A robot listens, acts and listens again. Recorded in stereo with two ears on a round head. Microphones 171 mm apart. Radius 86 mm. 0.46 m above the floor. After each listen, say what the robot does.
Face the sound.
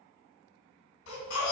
Turn 90° left.
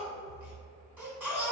Turn 10° right.
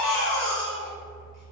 Facing the baby crying, 1 to 2 m away.